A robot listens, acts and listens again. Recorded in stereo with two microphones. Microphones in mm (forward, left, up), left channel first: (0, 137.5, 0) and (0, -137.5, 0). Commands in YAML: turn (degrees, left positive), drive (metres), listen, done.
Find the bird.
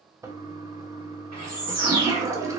turn: 70
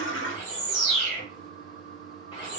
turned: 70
turn: 25
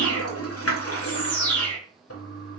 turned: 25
done: "Found it: a bird, straight ahead, 1 to 2 m away."